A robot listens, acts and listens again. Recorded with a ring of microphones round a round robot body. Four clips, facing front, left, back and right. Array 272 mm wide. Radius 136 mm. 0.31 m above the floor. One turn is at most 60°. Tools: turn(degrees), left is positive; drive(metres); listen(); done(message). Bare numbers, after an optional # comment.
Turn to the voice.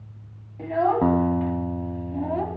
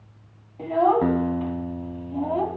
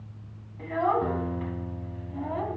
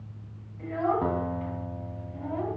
# The child speaking: 55° left.
turn(55)
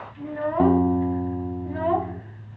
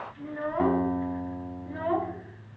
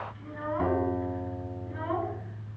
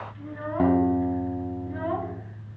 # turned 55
done("Found it: a child speaking, straight ahead.")